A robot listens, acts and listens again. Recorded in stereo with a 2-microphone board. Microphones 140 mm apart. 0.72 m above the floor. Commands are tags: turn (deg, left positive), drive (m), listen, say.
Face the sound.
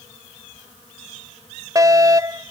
<turn deg="-25"/>
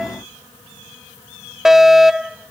<say>Found it: a fire alarm, straight ahead.</say>